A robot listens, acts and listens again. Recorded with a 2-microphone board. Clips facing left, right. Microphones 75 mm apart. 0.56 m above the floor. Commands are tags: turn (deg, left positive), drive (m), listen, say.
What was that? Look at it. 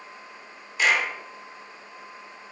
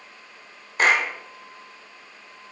<turn deg="-40"/>
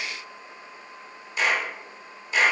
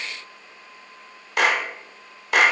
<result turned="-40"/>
<turn deg="-90"/>
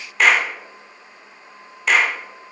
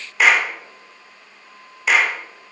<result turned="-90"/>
<say>Found it: a clap, straight ahead, 1 to 2 m away.</say>